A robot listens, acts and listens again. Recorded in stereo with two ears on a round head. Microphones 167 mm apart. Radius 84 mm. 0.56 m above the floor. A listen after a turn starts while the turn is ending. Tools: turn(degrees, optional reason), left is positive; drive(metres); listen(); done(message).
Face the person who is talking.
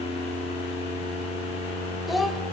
turn(degrees=30)
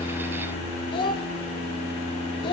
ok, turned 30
turn(degrees=150, reason="So it is at 150° left.")
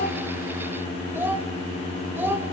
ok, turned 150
turn(degrees=-10, reason="The child speaking is now 10° right.")
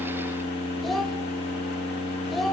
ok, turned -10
done("Facing the child speaking, 1 to 2 m away.")